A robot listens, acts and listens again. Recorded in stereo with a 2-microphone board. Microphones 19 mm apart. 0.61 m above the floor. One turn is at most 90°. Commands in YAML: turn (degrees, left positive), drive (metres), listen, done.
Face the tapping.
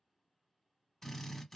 listen: true
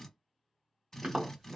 turn: -90
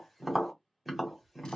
done: "Facing the tapping, 1 to 2 m away."